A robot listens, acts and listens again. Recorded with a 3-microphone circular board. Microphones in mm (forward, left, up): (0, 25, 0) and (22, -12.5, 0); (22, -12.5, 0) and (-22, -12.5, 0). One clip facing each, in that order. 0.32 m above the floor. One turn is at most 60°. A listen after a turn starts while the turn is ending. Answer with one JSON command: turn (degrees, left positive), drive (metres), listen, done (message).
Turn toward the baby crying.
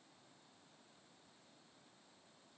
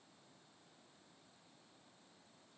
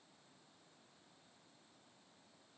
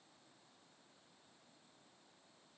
{"listen": true}
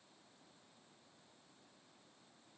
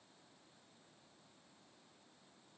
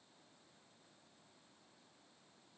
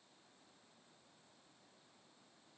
{"listen": true}
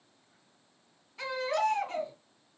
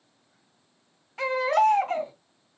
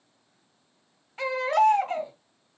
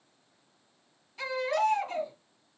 {"turn": -45}
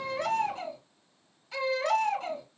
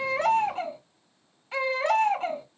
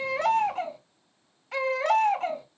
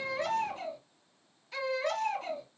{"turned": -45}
{"done": "Facing the baby crying."}